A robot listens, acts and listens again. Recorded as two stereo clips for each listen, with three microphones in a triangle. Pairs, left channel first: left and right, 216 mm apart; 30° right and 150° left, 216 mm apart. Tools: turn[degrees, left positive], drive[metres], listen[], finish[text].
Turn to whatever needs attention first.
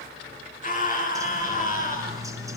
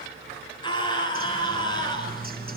Thought: The scream: 40° left.
Action: turn[40]
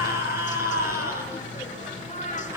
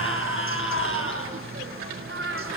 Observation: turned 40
Thought: The scream is now 15° right.
Action: turn[-15]
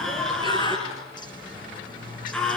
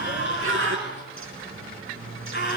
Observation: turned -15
Action: finish[Found it: a scream, straight ahead, over 4 m away.]